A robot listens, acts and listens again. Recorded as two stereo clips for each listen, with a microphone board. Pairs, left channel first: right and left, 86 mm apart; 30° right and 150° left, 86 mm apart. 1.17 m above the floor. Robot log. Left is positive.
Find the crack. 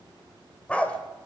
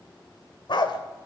cmd idle
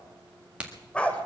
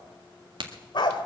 note: The crack: 165° left.
cmd yaw +165
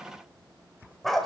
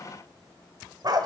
end: I heard a crack from this way, but can't make it out now.